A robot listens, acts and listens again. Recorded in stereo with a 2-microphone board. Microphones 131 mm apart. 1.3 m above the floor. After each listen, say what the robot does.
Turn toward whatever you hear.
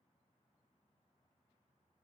Keep listening.
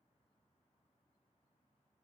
Keep listening.
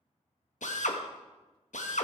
Turn 70° left.
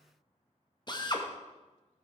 Turn 35° left.
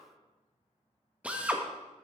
Turn 10° right.
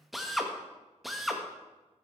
Found it: a drill, straight ahead.